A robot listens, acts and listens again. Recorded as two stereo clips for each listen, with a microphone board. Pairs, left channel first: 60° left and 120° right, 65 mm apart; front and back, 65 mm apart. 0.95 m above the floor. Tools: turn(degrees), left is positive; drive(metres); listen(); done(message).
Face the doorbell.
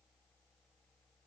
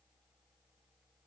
listen()
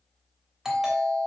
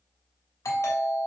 turn(degrees=-35)
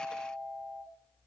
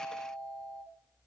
done("Found it: a doorbell, straight ahead, 2 to 4 m away.")